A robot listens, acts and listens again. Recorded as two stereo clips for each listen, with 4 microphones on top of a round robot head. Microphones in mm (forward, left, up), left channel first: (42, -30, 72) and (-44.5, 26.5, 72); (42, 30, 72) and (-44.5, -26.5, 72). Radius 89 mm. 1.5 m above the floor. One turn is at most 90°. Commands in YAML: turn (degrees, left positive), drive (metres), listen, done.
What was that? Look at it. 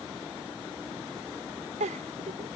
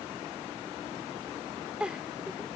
turn: 90
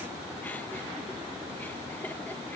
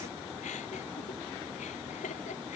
turn: 40
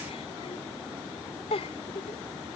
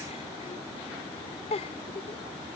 done: "Facing the giggle."